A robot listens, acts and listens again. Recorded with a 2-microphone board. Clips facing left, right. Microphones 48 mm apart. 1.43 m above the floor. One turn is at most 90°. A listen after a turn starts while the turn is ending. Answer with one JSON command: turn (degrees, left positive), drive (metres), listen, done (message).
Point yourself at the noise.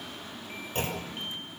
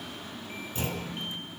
{"turn": 50}
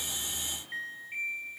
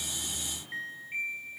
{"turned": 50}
{"listen": true}
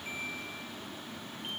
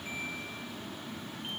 {"done": "I heard a clunk, but can't make it out now. It was about straight ahead or 80° left."}